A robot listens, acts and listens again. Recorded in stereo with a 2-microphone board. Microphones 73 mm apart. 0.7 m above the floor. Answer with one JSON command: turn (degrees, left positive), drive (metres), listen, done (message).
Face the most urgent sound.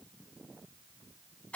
{"listen": true}
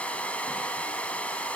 {"listen": true}
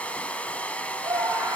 {"turn": -90}
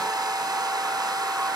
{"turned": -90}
{"listen": true}
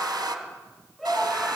{"done": "Found it: a scream, straight ahead."}